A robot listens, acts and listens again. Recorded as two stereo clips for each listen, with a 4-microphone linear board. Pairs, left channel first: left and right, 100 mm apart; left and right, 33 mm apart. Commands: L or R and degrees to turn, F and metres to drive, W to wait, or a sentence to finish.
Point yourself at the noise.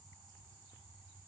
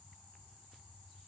W
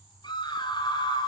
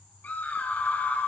L50
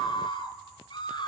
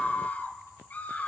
L65
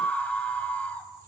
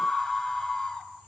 L15
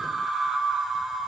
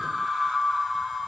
Facing the scream.